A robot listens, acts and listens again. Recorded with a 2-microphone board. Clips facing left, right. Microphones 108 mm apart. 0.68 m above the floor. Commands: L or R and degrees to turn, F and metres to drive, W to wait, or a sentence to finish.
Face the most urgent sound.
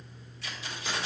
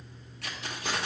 W
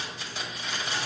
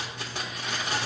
W
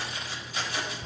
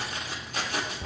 I can't make out anything urgent to turn to.